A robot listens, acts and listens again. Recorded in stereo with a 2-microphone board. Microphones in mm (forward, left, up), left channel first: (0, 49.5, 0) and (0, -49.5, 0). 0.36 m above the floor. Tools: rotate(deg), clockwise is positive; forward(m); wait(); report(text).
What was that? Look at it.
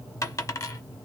rotate(-35)
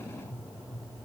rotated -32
wait()
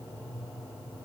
report("I heard a dropped coin, but can't make it out now. It was about straight ahead or 115° left.")